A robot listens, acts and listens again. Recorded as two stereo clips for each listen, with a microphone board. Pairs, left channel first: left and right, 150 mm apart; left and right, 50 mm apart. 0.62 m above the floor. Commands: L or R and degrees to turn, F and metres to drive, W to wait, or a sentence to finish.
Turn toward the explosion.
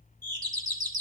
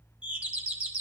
W
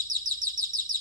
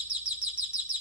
W
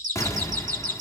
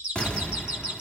L20
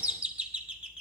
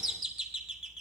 W
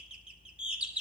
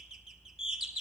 I heard an explosion, but can't make it out now. It was about straight ahead or 140° left.